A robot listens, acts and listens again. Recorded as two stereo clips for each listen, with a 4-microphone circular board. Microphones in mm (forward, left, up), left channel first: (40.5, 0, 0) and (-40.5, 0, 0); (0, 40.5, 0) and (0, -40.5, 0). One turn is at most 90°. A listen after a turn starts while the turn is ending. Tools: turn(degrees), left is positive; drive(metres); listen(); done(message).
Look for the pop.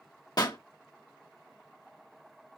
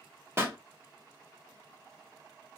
turn(degrees=-30)
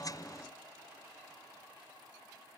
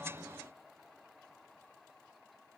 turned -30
done("Facing where the pop came from. I can't hear it now.")